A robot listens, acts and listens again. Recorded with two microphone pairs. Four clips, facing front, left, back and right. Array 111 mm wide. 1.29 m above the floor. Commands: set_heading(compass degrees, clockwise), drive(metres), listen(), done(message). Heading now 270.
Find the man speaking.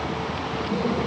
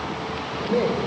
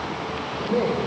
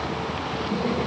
set_heading(150)
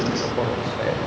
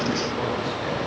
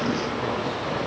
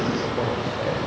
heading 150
set_heading(160)
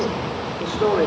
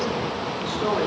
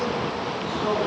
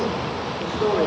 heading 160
done("Found it: a man speaking, straight ahead, over 4 m away.")